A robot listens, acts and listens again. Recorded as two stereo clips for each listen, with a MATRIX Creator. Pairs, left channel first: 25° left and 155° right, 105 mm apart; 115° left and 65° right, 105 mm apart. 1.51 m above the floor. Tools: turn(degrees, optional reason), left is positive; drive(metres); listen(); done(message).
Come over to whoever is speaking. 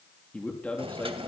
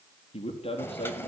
turn(degrees=100, reason="The man speaking: 100° left.")
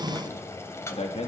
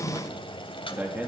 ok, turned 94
drive(metres=1.0)
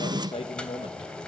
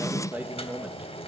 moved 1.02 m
drive(metres=1.0)
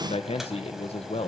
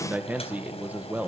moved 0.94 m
drive(metres=1.0)
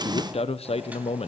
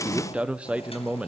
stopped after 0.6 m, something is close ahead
turn(degrees=10, reason="The man speaking is now 10° left.")
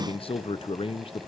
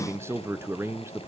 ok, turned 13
done("Arrived at the man speaking, straight ahead.")